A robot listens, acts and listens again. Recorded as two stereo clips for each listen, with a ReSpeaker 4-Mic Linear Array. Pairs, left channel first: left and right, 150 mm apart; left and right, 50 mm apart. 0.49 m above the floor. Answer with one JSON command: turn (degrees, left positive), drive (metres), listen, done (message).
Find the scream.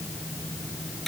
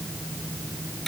{"listen": true}
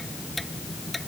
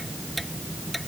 {"listen": true}
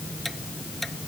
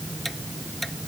{"done": "I can't make out a scream to turn to."}